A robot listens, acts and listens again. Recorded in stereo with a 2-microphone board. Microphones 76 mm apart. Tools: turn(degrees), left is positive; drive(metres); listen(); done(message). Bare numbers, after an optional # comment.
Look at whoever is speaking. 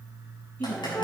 # The woman speaking: about 20° left or 160° left.
turn(20)
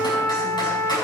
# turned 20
listen()
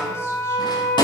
listen()
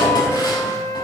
done("I heard a woman speaking, but can't make it out now. It was about straight ahead or 140° left.")